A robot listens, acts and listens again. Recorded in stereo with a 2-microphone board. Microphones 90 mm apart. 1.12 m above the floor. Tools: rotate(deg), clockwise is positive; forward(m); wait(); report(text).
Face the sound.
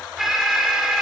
rotate(30)
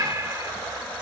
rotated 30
rotate(145)
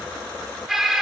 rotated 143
report("Facing the alarm.")